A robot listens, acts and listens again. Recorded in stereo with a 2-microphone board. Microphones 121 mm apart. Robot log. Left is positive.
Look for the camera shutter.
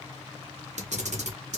note: The camera shutter: about 75° right or 105° right.
cmd yaw -75
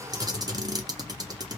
note: So it is at 35° right.
cmd yaw -35
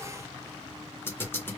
note: The camera shutter is now 20° left.
cmd yaw +20
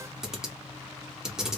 end: Facing the camera shutter, under 1 m away.